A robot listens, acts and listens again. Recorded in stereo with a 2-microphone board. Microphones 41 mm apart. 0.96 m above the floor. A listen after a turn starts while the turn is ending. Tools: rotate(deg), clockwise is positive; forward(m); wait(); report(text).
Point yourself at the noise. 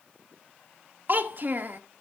rotate(50)
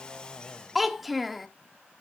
report("Facing the child speaking, 1 to 2 m away.")